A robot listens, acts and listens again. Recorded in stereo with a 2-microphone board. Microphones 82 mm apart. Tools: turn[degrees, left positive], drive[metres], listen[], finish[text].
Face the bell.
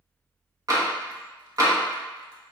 Action: listen[]
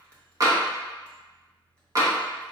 Action: listen[]
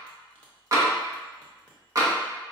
Action: finish[I can't make out a bell, only tapping.]